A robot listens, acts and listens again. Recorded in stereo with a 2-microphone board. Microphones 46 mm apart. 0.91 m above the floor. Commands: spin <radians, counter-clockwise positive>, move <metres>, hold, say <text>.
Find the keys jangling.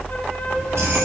spin -1.57
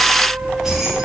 spin -0.17
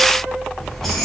say Facing the keys jangling, over 4 m away.